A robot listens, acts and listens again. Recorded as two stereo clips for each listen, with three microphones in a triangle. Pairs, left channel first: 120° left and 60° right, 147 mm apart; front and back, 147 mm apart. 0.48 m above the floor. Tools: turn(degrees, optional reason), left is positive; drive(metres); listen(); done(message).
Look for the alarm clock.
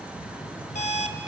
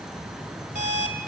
turn(degrees=150, reason="The alarm clock: 150° left.")
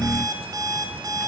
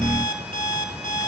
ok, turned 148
done("Facing the alarm clock.")